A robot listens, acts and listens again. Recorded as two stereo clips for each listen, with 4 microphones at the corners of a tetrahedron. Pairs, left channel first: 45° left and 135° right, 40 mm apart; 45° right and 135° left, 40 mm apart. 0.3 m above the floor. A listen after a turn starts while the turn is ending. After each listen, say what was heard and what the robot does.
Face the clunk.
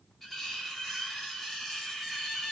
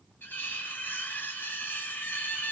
Keep listening.
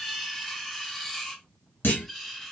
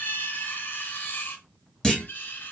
The clunk: 30° left. Turn 30° left.
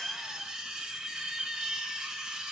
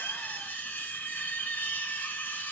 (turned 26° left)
I heard a clunk from this way, but can't make it out now.